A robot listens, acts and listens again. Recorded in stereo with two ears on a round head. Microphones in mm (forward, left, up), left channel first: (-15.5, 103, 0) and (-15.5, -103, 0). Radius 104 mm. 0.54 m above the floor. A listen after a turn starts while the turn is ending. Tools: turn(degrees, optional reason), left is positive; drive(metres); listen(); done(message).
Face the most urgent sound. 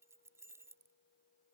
listen()
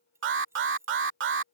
turn(degrees=-55, reason="The alarm: about 55° right or 125° right.")
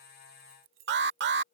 turn(degrees=-55, reason="So it is at 55° right.")
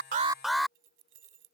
done("Facing the alarm.")